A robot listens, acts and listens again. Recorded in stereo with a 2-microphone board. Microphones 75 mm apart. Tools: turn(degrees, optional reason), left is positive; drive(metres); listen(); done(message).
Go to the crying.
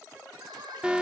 turn(degrees=-90)
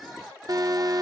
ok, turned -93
listen()
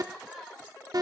drive(metres=1.0)
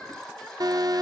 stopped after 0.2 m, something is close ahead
turn(degrees=10, reason="The crying is now 10° left.")
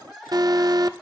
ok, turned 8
done("Something is in my way. I am facing the crying but have not reached it.")